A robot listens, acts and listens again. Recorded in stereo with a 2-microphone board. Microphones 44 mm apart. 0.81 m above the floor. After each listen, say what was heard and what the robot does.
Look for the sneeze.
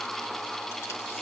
Keep listening.
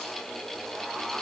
Keep listening.
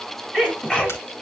The sneeze: about 15° left or 165° left. Turn 15° left.
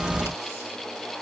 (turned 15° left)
Keep listening.
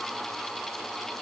I heard a sneeze, but can't make it out now. It was about straight ahead or 150° left.